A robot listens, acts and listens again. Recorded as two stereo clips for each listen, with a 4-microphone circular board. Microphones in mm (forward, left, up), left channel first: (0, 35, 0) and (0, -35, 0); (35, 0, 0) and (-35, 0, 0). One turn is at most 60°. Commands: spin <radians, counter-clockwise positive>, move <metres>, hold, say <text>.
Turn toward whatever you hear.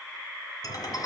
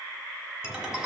spin 1.05
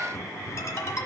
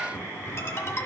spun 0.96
spin 0.79
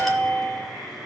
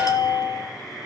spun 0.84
say Facing the ringtone.